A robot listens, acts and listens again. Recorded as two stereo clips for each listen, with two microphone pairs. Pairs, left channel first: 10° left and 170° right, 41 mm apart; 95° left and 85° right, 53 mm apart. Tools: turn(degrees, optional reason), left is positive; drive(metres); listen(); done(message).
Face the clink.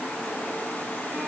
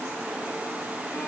listen()
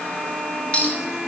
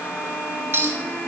turn(degrees=-50, reason="The clink: 50° right.")
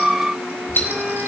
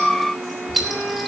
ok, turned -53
done("Facing the clink, 2 to 4 m away.")